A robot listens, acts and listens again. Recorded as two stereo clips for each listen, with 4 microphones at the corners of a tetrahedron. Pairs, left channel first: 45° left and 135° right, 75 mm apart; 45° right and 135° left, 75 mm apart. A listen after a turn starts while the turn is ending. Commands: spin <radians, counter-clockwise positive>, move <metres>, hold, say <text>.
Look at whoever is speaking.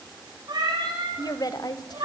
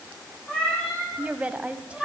spin 1.13
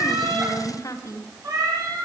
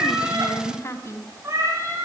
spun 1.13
say Facing the woman speaking, 2 to 4 m away.